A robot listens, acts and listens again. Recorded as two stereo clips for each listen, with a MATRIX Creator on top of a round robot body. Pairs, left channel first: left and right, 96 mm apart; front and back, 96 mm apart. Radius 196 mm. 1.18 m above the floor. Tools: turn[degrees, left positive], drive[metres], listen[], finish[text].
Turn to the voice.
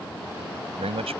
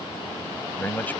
Thought: The man speaking: 75° right.
Action: turn[-75]
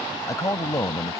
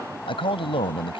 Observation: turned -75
Thought: The man speaking is now 30° left.
Action: turn[30]
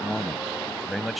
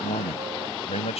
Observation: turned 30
Action: finish[Facing the man speaking.]